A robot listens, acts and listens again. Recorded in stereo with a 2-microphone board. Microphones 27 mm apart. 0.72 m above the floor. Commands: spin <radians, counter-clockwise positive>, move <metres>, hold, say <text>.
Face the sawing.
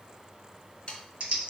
spin 0.70
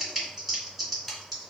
say Found it: sawing, straight ahead.